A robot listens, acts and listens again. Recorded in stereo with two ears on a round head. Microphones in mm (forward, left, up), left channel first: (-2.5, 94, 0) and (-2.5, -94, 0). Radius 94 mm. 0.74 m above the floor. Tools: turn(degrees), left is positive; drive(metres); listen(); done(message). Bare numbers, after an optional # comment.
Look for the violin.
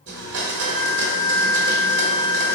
turn(-30)
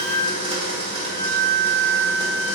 # So it is at 140° right.
turn(-140)
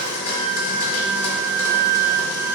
# The violin is now 15° right.
turn(-15)
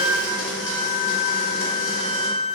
done("Facing the violin.")